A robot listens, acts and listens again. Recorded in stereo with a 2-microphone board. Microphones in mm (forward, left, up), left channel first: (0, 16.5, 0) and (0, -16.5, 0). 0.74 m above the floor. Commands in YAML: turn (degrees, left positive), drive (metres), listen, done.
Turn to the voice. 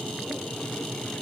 listen: true
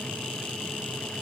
listen: true
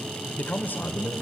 turn: 90
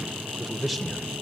done: "Facing the man speaking, 2 to 4 m away."